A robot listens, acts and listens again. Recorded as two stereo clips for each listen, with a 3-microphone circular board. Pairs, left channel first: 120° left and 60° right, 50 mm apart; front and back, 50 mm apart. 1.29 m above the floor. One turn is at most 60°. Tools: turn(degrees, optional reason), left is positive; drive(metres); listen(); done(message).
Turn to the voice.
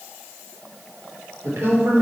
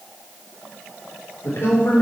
turn(degrees=-30, reason="The woman speaking: 30° right.")
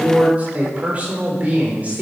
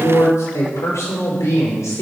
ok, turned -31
done("Facing the woman speaking.")